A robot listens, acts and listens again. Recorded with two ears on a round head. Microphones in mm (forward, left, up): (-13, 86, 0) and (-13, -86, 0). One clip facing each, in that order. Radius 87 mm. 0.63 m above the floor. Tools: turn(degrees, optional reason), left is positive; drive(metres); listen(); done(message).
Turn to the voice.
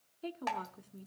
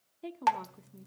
turn(degrees=-30)
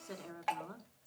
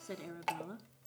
turn(degrees=-145, reason="So it is at 145° right.")
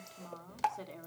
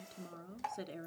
turn(degrees=-20, reason="The woman speaking is now 20° right.")
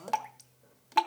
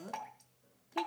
turn(degrees=-10, reason="The woman speaking is now 10° right.")
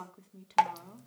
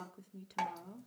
done("Found it: a woman speaking, straight ahead.")